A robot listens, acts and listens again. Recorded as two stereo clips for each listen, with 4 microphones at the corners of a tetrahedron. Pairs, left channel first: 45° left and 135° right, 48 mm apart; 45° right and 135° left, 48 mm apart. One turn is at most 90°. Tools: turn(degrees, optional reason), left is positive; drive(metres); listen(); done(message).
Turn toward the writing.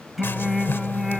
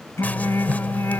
turn(degrees=10, reason="The writing: 10° left.")
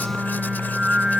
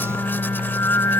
done("Facing the writing.")